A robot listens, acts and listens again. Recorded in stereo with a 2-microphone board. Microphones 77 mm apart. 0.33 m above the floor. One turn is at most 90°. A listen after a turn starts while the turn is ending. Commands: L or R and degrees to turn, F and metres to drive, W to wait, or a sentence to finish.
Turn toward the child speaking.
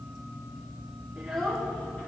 L30
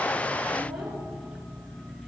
W
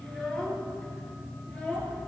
L20
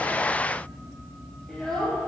L30
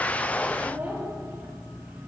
R25
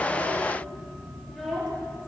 Facing the child speaking, 2 to 4 m away.